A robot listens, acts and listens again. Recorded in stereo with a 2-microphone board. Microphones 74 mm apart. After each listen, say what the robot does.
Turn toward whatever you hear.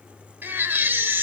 Turn 25° right.
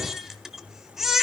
Facing the baby crying, 1 to 2 m away.